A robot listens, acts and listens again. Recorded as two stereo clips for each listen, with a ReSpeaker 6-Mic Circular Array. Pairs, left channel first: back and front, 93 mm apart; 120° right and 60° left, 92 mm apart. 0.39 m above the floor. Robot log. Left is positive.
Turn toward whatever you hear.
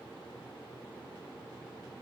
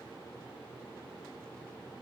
cmd idle
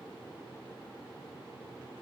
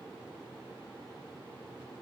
cmd idle
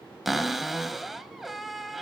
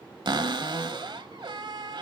note: The cupboard door: 90° left.
cmd yaw +90
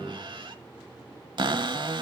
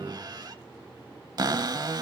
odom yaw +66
note: The cupboard door is now 25° left.
cmd yaw +25
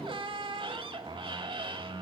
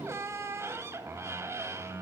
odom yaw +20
end: Facing the cupboard door, under 1 m away.